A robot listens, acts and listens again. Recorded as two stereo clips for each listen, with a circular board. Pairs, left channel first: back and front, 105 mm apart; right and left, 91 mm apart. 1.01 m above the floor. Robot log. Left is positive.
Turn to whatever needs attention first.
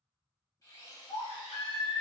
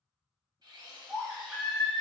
note: The baby crying: straight behind.
cmd yaw +180
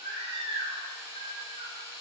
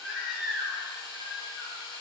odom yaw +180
end: Found it: a baby crying, straight ahead, under 1 m away.